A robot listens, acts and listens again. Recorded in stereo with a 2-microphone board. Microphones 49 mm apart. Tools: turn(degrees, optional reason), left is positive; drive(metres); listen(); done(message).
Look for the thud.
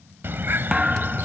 turn(degrees=-30)
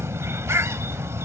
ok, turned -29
listen()
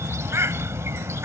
done("I heard a thud, but can't make it out now. It was about 15° left or 135° right.")